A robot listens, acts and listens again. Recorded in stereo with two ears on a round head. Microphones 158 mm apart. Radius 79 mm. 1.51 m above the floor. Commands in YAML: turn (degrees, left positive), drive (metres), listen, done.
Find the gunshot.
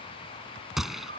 turn: 30
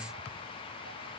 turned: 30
listen: true
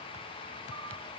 done: "I heard a gunshot, but can't make it out now. It was about 30° right or 150° left."